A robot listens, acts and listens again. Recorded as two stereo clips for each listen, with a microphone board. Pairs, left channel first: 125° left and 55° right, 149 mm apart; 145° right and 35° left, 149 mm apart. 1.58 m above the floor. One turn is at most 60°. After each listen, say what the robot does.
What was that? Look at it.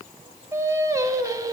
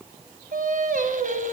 Turn 10° left.
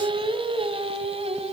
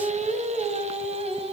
Turn 10° right.
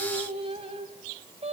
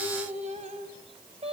Turn 10° right.
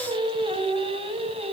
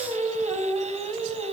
Turn 10° right.
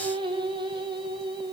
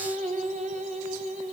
Facing the singing, 2 to 4 m away.